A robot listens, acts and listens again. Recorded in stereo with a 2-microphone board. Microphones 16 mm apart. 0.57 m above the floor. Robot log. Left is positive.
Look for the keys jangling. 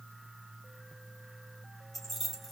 cmd yaw +30
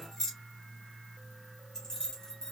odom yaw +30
note: So it is at 145° left.
cmd yaw +145
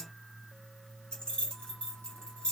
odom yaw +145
note: The keys jangling is now 80° left.
cmd yaw +80
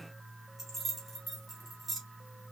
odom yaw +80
note: The keys jangling is now 15° right.
cmd yaw -15
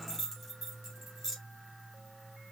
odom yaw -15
end: Found it: keys jangling, straight ahead, 2 to 4 m away.